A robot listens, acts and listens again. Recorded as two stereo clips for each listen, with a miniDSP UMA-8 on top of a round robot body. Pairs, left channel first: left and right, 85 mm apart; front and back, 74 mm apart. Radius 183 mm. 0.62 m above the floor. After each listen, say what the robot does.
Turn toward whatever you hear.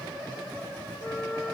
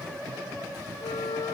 Facing the flute, 1 to 2 m away.